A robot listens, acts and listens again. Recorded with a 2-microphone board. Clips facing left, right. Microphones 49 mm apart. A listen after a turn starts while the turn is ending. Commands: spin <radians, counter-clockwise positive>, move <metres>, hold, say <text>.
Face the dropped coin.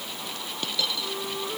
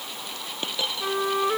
spin -0.52
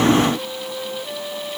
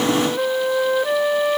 hold
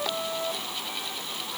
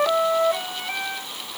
say I heard a dropped coin, but can't make it out now. It was about straight ahead or 120° right.